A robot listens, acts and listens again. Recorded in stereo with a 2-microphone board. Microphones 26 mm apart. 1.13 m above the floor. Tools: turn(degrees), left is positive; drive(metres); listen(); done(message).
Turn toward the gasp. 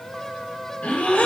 turn(degrees=90)
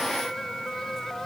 done("I heard a gasp from this way, but can't make it out now.")